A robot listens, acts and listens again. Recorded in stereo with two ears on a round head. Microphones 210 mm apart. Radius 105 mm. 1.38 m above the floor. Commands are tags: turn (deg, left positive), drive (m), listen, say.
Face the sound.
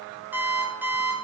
<turn deg="-30"/>
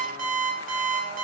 <turn deg="-145"/>
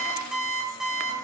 <say>Found it: an alarm clock, straight ahead.</say>